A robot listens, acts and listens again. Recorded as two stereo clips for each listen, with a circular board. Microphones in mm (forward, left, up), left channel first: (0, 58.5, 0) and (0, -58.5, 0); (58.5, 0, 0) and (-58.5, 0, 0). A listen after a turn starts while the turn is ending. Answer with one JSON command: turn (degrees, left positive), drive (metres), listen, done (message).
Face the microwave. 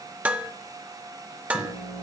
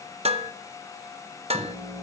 {"turn": 125}
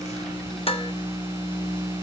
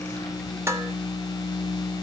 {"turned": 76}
{"turn": 50}
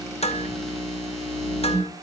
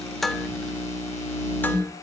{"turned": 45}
{"done": "Found it: a microwave, straight ahead, over 4 m away."}